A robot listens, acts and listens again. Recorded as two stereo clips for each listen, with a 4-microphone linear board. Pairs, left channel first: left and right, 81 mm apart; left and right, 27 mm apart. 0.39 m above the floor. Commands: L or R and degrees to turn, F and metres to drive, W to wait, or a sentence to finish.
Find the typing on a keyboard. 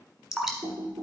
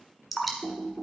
R90
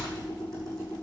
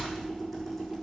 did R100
Facing the typing on a keyboard.